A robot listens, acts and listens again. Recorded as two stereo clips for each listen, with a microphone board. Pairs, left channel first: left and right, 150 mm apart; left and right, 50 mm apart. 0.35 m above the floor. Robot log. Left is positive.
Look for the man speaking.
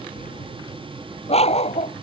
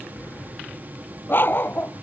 cmd idle
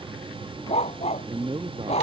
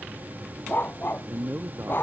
note: The man speaking: about 40° right or 140° right.
cmd yaw -40
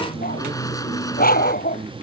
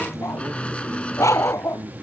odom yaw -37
cmd idle
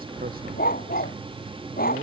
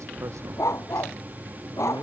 cmd idle
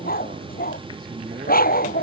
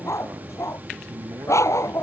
end: I heard a man speaking, but can't make it out now. It was about 5° right or 105° right.